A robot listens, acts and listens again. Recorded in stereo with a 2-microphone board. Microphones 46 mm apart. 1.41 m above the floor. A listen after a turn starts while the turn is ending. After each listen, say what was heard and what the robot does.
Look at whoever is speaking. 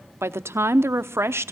The woman speaking: about 70° right or 110° right. Turn 70° right.
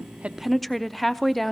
Found it: a woman speaking, straight ahead, under 1 m away.